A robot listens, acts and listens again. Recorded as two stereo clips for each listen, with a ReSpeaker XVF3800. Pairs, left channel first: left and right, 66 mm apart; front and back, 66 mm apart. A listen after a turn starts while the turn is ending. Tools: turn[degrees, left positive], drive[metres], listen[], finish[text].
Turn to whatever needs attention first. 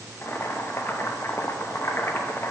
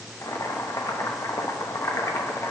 Action: listen[]
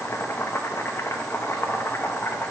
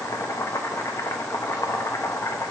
Action: listen[]
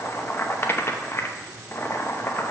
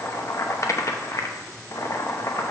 Action: finish[I can't make out anything urgent to turn to.]